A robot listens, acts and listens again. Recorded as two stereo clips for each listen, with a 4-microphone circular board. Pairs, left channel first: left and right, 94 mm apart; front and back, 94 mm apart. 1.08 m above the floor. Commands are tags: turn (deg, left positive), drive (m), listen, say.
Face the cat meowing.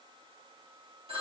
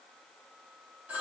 <listen/>
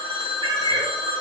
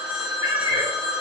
<turn deg="-120"/>
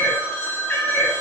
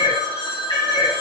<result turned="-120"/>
<turn deg="30"/>
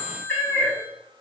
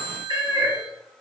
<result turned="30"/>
<turn deg="15"/>
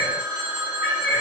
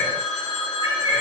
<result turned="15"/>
<say>Found it: a cat meowing, straight ahead, 2 to 4 m away.</say>